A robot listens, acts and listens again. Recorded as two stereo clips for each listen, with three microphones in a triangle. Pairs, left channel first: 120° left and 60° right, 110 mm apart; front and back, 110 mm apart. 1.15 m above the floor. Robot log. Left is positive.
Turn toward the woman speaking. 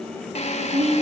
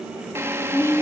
note: The woman speaking: 65° right.
cmd yaw -65
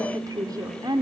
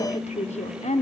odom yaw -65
end: Found it: a woman speaking, straight ahead.